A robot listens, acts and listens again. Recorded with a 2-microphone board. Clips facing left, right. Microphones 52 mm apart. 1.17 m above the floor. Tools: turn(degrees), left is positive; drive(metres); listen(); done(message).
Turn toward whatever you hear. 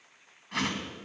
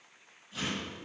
turn(degrees=90)
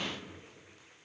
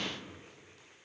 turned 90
listen()
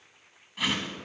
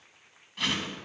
done("Found it: a whoosh, straight ahead.")